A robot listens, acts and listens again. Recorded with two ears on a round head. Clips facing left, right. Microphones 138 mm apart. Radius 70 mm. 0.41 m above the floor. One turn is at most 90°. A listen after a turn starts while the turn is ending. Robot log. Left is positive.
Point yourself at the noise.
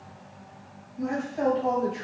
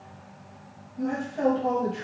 cmd yaw +30
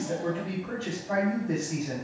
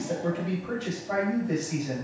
note: So it is at 25° right.
cmd yaw -25
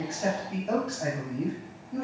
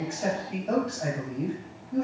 end: Found it: a man speaking, straight ahead.